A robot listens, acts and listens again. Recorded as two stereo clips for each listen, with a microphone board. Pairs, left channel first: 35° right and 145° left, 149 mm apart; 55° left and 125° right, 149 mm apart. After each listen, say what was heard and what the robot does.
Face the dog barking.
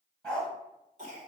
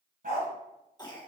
The dog barking: 120° right. Turn 120° right.
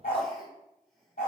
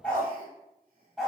The dog barking is now 40° right. Turn 40° right.
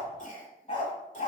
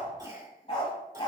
Found it: a dog barking, straight ahead.